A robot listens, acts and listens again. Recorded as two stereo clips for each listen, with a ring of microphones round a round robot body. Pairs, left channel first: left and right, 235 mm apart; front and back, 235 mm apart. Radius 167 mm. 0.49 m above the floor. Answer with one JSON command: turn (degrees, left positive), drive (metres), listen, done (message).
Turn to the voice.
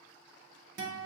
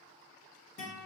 {"listen": true}
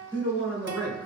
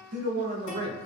{"turn": -160}
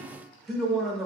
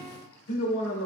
{"done": "Facing the man speaking."}